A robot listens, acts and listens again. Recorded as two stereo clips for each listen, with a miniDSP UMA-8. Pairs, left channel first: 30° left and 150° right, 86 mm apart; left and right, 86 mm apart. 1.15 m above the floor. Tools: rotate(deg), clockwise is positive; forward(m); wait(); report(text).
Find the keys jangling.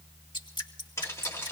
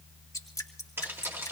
rotate(30)
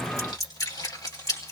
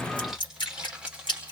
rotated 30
rotate(15)
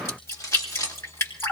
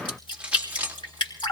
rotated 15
rotate(20)
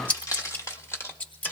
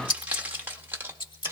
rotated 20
rotate(30)
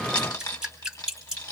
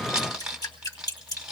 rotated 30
rotate(10)
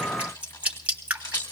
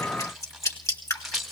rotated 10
report("Facing the keys jangling.")